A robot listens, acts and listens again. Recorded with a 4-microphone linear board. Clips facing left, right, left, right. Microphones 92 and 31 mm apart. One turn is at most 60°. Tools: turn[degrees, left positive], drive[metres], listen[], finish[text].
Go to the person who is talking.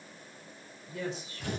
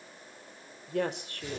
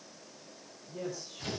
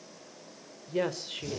Thought: The woman speaking: about 65° right or 115° right.
Action: turn[-60]
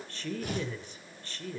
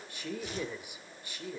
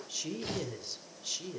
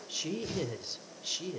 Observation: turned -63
Thought: So it is at 10° right.
Action: turn[-10]
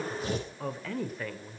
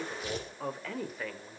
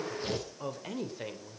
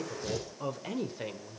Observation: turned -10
Action: drive[1.0]
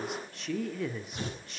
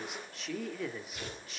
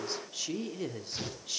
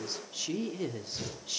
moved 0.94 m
Action: drive[1.0]
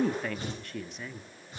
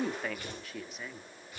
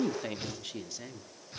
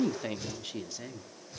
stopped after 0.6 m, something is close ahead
Action: finish[Arrived at the woman speaking, straight ahead.]